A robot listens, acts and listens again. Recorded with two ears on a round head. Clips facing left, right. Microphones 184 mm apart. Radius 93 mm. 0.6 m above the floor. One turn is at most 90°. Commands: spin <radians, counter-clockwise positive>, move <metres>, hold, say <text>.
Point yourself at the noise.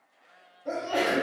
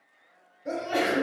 spin -0.44
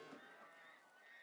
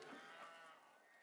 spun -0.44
hold
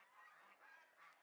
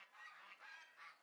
say I heard a sneeze, but can't make it out now. It was about straight ahead or 130° right.